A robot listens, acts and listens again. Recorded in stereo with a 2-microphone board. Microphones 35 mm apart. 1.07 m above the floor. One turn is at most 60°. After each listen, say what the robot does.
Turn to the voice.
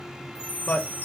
Turn 55° left.
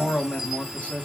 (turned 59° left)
Turn 45° left.
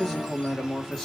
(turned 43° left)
Found it: a man speaking, straight ahead.